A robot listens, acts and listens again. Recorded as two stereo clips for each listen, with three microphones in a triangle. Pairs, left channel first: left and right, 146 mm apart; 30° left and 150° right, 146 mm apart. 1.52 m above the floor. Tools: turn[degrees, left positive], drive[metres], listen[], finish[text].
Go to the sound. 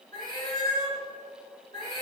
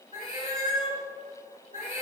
Thought: The cat meowing: 40° left.
Action: turn[40]
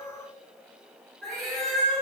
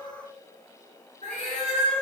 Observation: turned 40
Action: drive[1.0]
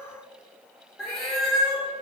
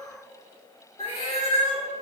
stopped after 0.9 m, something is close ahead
Action: finish[Arrived at the cat meowing, straight ahead.]